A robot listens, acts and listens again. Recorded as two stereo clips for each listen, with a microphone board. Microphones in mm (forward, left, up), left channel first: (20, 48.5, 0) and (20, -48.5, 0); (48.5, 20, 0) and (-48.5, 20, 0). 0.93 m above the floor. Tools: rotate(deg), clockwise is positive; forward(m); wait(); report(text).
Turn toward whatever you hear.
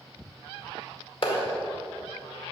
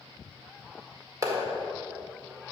rotate(-120)
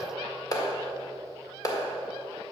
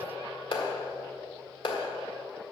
rotate(-35)
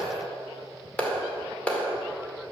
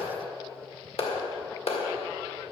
rotate(-10)
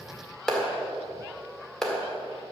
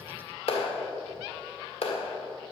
report("Facing the clap, 2 to 4 m away.")